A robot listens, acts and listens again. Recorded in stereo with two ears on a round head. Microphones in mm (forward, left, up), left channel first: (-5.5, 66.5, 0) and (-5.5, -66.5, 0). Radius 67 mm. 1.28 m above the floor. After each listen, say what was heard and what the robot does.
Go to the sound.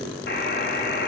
The buzzer: about 65° left or 115° left. Turn 65° left.
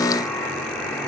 Drive 1.0 m forward.
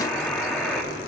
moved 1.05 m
Drive 1.0 m forward.
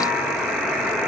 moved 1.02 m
Drive 1.0 m forward.
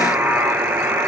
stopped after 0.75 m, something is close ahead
The buzzer is now 10° right. Turn 10° right.
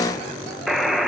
Arrived at the buzzer, straight ahead.